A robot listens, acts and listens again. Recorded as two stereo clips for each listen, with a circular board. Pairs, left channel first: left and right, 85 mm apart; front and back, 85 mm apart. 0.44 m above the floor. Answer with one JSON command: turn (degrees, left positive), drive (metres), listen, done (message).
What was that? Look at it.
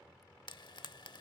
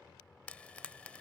{"turn": 75}
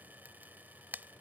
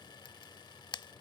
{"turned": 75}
{"turn": -20}
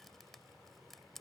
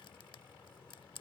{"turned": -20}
{"done": "Found it: frying, straight ahead."}